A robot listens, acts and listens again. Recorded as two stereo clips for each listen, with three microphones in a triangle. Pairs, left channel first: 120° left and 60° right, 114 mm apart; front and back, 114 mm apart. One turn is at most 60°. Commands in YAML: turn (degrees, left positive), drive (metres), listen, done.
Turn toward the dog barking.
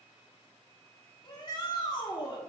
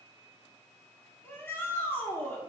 listen: true
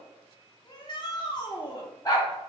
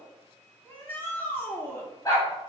turn: 60
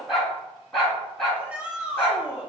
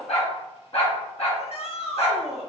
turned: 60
turn: 35
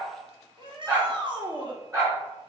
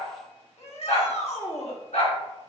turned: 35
done: "Facing the dog barking."